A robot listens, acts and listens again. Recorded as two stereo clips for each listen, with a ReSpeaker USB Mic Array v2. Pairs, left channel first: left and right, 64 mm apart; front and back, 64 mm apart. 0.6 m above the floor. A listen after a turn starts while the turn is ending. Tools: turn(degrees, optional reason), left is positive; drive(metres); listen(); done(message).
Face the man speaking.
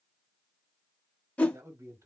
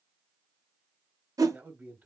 turn(degrees=-125, reason="The man speaking: 125° right.")
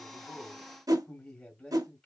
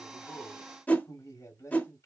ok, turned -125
turn(degrees=10, reason="The man speaking is now 10° left.")
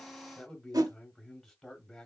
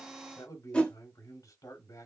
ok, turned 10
done("Found it: a man speaking, straight ahead.")